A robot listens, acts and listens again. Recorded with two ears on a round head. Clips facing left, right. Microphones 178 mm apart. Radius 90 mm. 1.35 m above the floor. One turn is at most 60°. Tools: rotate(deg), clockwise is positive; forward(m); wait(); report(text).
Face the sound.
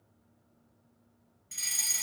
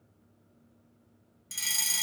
rotate(60)
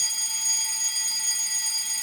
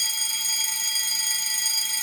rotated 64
rotate(45)
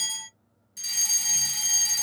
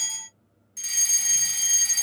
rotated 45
report("Facing the fire alarm, 2 to 4 m away.")